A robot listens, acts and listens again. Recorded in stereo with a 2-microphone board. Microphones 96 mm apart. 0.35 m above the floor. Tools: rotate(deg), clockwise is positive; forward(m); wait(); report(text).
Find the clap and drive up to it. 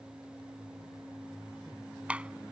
rotate(30)
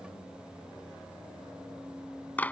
rotate(-20)
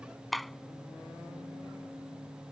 forward(1.0)
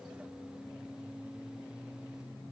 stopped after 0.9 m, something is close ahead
wait()
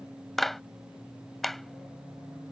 report("Arrived at the clap, straight ahead.")